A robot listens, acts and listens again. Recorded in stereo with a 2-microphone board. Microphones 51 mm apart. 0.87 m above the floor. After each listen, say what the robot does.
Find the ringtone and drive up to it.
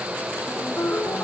Turn 50° left.
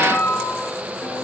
Turn 85° left.
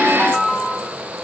Turn 25° left.
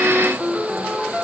Drive 1.0 m forward.
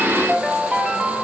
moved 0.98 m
Drive 1.0 m forward.
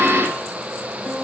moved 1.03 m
Keep listening.
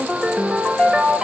Drive 1.0 m forward.
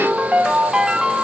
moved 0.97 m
Turn 15° right.
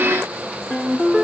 Drive 1.0 m forward.
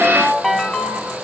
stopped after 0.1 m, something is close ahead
I am next to the ringtone.